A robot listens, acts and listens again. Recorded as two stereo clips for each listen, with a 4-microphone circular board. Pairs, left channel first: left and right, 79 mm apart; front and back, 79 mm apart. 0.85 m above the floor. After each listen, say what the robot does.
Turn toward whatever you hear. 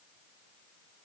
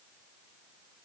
Keep listening.
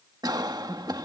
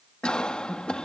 Turn 75° right.
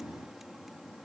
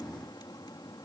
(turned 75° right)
Keep listening.
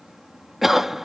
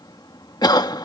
Found it: a cough, straight ahead.